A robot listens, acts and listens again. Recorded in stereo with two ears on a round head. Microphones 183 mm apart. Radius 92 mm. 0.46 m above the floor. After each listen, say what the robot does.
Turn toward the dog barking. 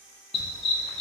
Turn 30° left.
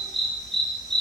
Found it: a dog barking, straight ahead, over 4 m away.